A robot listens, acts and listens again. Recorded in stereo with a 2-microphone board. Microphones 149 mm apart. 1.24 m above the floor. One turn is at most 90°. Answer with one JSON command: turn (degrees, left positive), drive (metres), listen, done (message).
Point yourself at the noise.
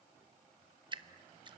{"turn": -30}
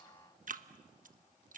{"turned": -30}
{"turn": -90}
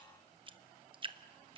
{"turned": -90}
{"turn": -35}
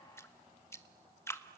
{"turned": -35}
{"turn": 20}
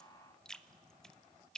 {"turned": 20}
{"done": "Found it: dripping, straight ahead."}